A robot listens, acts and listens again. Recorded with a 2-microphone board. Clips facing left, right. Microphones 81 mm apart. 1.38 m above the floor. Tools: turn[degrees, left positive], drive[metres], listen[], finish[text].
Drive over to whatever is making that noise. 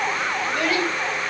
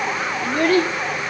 Thought: The child speaking: about 40° right or 140° right.
Action: turn[-40]
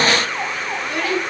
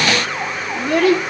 Thought: So it is at 95° right.
Action: turn[-95]
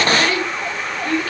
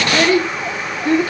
Thought: The child speaking is now 25° right.
Action: turn[-25]
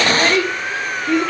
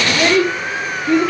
Action: drive[1.0]
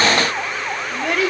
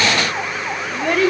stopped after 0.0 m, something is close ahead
Action: finish[Blocked. The child speaking is further on, straight ahead.]